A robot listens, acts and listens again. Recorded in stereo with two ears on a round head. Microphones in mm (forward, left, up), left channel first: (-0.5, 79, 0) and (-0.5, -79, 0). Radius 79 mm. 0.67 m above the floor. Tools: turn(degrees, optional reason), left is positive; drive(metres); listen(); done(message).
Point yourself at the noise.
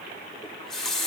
turn(degrees=30)
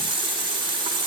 turn(degrees=-30, reason="So it is at 30° right.")
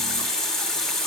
done("Facing the running tap, 1 to 2 m away.")